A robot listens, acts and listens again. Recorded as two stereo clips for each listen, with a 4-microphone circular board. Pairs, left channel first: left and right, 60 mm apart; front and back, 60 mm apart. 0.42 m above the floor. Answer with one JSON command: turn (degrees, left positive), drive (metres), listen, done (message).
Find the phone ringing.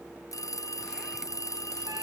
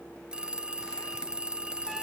{"turn": 105}
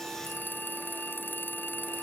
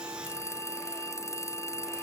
{"turn": 35}
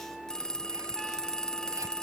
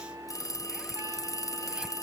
{"turn": 10}
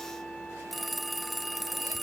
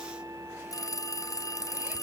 {"done": "Found it: a phone ringing, straight ahead."}